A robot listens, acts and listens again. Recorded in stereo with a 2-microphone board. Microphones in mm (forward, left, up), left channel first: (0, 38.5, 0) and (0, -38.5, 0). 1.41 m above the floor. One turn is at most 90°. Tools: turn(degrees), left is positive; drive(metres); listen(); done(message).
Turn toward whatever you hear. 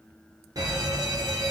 turn(degrees=-55)
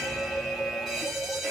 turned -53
done("Found it: an alarm, straight ahead.")